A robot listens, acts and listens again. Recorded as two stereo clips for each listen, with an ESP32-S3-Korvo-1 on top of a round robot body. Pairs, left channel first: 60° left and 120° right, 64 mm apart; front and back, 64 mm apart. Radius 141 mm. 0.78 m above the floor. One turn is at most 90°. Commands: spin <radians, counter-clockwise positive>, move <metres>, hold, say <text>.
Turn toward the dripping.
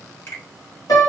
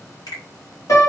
hold
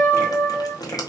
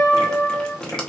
spin 1.40
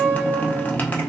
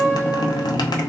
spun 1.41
say Facing the dripping.